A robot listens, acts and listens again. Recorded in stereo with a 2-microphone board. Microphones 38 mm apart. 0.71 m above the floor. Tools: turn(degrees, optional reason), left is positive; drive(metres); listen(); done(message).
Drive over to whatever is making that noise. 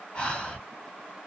turn(degrees=20, reason="The breathing: about 20° left or 160° left.")
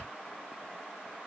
turn(degrees=130, reason="So it is at 130° left.")
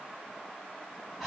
drive(metres=1.0)
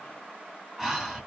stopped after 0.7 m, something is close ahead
done("I am next to the breathing.")